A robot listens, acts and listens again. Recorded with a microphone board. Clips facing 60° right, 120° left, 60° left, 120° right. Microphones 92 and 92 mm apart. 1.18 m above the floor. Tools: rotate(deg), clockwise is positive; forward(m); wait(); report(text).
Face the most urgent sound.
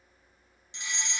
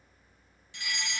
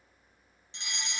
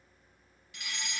report("Facing the fire alarm, 1 to 2 m away.")